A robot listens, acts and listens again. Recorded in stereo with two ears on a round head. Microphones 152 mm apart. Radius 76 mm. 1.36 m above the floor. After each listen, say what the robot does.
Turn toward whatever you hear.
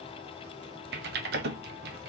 Turn 65° right.
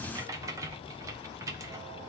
Turn 20° right.
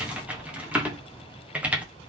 Turn 10° right.
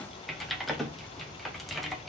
Facing the typing on a keyboard.